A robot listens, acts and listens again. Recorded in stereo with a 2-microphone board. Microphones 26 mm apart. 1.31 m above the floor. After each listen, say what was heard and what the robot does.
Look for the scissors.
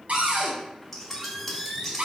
Turn 30° left.
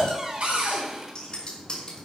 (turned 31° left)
So it is at 140° left. Turn 140° left.
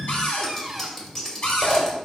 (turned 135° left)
Facing the scissors.